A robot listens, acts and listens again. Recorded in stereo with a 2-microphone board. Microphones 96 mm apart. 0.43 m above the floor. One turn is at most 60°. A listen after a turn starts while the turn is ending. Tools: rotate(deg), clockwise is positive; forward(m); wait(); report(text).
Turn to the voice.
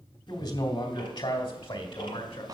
rotate(-60)
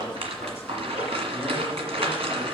wait()
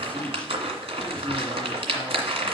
wait()
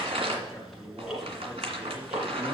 report("Facing the man speaking.")